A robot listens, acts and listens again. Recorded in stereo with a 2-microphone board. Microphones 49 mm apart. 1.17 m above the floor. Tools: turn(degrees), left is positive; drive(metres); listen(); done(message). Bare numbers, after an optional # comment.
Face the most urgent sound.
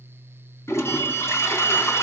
# The alarm: about 40° left or 140° left.
turn(40)
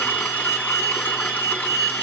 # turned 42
done("Found it: an alarm, straight ahead, over 4 m away.")